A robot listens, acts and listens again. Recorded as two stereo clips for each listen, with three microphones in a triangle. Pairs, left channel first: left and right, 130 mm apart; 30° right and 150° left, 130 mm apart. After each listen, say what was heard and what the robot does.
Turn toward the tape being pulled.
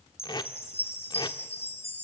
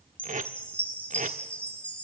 The tape being pulled: 145° left. Turn 145° left.
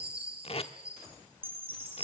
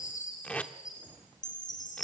The tape being pulled is now 50° left. Turn 50° left.
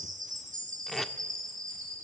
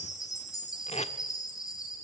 Found it: tape being pulled, straight ahead, 1 to 2 m away.